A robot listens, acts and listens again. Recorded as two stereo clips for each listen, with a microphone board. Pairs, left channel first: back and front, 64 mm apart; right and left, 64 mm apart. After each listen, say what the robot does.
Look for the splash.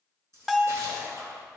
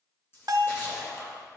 Turn 40° right.
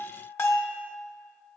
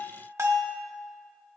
Facing where the splash came from. I can't hear it now.